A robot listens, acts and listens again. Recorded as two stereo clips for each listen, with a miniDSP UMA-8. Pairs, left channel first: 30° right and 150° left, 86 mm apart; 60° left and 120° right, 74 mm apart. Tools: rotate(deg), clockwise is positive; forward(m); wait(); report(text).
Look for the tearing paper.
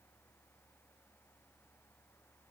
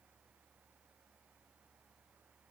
wait()
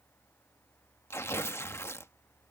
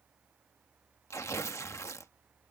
rotate(-20)
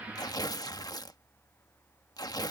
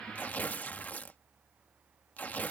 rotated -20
report("Facing the tearing paper.")